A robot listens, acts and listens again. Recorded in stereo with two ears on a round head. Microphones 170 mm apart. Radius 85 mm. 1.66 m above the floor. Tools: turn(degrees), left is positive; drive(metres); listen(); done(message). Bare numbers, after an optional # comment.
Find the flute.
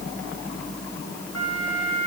turn(90)
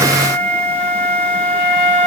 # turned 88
done("Found it: a flute, straight ahead, 2 to 4 m away.")